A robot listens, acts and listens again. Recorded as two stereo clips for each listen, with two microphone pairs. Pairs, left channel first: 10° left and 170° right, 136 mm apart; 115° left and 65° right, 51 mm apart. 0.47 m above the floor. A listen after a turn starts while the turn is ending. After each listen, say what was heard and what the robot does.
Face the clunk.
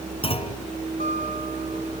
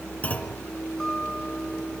The clunk: 55° left. Turn 55° left.
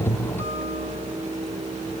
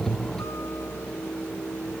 I heard a clunk from this way, but can't make it out now.